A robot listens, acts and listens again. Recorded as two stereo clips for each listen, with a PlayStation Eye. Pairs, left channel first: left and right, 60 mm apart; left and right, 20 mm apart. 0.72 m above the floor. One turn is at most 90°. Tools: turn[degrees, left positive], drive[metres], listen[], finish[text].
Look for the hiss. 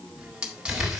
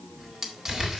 Action: turn[-30]
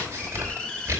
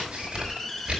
Thought: So it is at 15° left.
Action: turn[15]
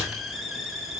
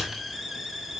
Action: finish[Found it: a hiss, straight ahead, 1 to 2 m away.]